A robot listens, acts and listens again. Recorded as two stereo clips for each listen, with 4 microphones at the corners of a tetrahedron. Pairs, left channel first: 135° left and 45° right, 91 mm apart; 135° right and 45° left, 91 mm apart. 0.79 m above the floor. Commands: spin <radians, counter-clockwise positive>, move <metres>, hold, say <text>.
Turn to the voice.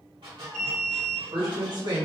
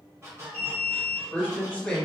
spin -1.05
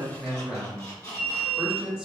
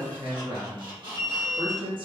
spin 0.61
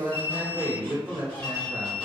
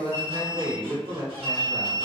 spin 0.35
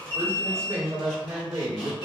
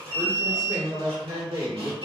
say Facing the woman speaking.